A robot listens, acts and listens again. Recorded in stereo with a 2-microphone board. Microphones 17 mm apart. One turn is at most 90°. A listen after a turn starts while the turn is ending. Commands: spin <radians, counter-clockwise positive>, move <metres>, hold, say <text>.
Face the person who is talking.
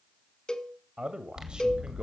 spin -0.96
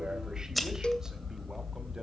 hold
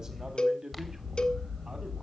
spin -0.61
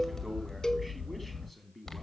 say Facing the man speaking.